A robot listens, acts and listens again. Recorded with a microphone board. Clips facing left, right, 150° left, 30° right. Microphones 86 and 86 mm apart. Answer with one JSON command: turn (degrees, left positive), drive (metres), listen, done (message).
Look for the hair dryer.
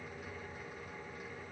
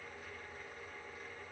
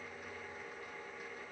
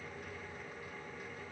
{"listen": true}
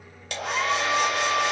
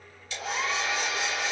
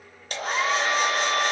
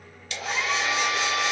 {"turn": 105}
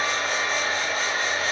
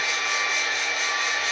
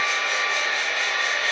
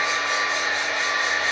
{"turn": 35}
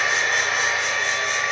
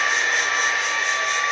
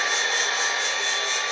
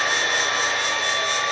{"done": "Facing the hair dryer."}